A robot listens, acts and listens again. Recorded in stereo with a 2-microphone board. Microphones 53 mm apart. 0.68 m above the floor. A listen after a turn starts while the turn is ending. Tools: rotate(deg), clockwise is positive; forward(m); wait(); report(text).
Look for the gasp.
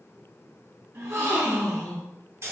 rotate(55)
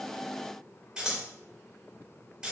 wait()
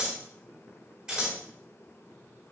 report("I heard a gasp, but can't make it out now. It was about straight ahead or 70° right.")